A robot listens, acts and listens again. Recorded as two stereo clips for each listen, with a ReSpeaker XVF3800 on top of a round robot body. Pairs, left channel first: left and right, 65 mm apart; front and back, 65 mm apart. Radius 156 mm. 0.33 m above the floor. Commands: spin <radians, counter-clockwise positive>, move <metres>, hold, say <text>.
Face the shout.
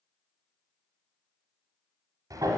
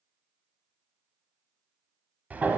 hold
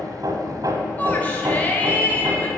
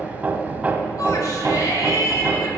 spin 0.44
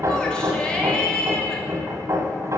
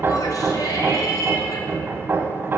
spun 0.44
spin 0.17
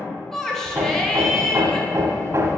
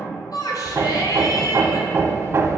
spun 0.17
say Facing the shout.